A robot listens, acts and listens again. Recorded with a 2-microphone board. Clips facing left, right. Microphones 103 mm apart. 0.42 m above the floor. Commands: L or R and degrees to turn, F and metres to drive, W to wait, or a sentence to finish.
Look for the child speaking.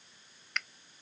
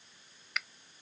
W
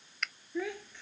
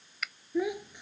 R15
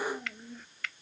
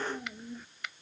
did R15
R30
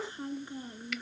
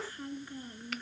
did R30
L15
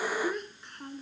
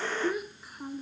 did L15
R10
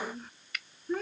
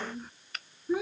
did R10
R10
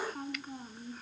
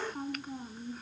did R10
Facing the child speaking.